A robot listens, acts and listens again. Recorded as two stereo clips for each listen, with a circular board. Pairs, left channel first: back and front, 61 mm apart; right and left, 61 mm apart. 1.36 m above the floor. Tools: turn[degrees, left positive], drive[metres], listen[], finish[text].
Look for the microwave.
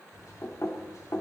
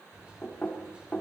Thought: The microwave: 160° left.
Action: turn[160]
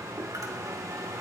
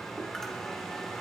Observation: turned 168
Thought: The microwave is now 10° right.
Action: turn[-10]
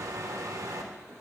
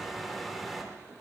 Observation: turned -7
Action: finish[Found it: a microwave, straight ahead.]